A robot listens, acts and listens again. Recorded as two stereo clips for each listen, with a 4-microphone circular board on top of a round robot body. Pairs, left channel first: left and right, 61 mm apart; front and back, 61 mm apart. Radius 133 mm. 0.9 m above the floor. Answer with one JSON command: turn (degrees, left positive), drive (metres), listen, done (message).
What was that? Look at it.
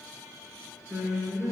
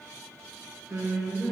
{"turn": -140}
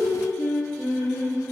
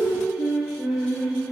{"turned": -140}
{"turn": 25}
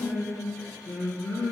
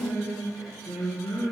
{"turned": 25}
{"turn": 15}
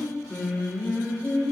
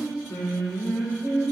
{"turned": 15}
{"turn": 10}
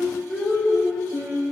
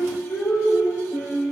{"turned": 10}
{"done": "Facing the singing, 2 to 4 m away."}